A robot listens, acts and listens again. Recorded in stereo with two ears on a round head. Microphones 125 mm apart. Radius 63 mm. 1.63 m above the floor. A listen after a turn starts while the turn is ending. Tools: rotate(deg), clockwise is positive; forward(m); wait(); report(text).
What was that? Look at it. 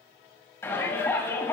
rotate(-20)
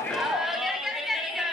report("Found it: a shout, straight ahead.")